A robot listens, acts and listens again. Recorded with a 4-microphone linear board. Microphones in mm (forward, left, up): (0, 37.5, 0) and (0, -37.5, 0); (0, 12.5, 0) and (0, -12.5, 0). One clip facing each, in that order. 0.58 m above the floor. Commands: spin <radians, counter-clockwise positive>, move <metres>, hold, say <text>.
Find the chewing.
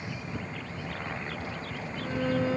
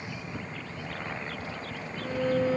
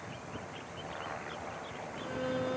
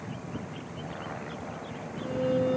hold
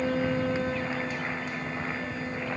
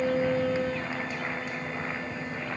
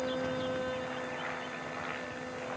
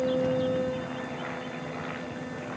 hold
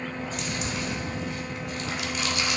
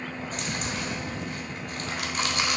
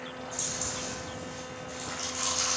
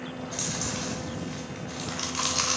spin -0.79
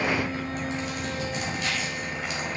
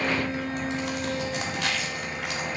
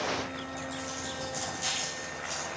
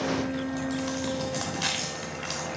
spin -1.48
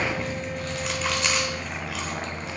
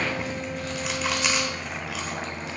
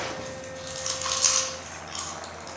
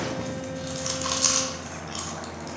say Facing the chewing.